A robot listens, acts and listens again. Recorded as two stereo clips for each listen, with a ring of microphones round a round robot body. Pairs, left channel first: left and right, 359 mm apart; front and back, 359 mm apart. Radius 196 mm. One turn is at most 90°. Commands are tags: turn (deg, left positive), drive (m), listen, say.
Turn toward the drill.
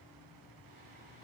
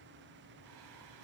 <listen/>
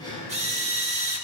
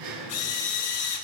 <turn deg="-20"/>
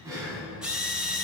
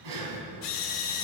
<say>Found it: a drill, straight ahead, 1 to 2 m away.</say>